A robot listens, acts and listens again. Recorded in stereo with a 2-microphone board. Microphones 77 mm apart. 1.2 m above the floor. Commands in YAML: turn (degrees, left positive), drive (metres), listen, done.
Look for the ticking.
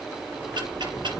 turn: -75
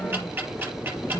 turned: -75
turn: -25
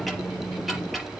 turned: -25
done: "Found it: ticking, straight ahead."